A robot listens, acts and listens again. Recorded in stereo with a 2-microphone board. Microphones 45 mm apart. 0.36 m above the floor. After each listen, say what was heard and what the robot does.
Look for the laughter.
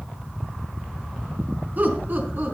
The laughter: about 45° right or 135° right. Turn 45° right.
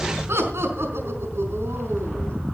So it is at 90° right. Turn 90° right.
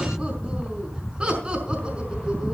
The laughter is now 25° right. Turn 25° right.
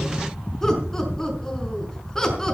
The laughter is now 10° left. Turn 10° left.
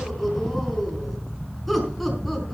Facing the laughter.